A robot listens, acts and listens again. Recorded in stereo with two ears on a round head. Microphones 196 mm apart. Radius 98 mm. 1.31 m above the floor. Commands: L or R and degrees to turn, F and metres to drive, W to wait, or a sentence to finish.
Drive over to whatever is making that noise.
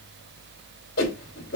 L50
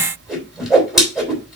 F1.0
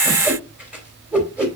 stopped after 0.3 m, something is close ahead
Something is in my way. I am facing the whoosh but have not reached it.